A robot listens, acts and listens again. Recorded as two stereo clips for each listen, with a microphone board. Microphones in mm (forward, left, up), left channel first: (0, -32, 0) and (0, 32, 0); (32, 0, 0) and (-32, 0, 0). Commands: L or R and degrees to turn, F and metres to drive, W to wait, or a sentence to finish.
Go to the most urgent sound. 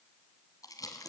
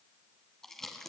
W
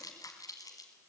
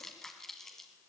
W
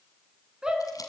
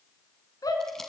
L15
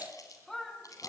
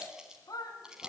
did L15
F1.0
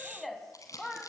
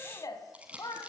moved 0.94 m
F1.0
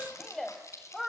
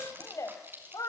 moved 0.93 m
F1.0
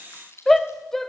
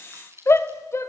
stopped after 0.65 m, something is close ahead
I am next to the shout.